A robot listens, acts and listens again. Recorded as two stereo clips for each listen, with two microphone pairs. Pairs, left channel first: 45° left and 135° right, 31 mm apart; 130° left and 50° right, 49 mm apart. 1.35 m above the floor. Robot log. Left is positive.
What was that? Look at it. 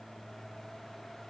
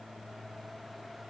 cmd idle
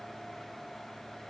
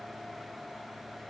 cmd idle
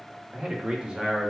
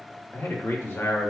note: The man speaking: 160° left.
cmd yaw +160
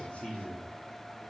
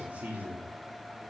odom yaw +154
end: Facing the man speaking, 2 to 4 m away.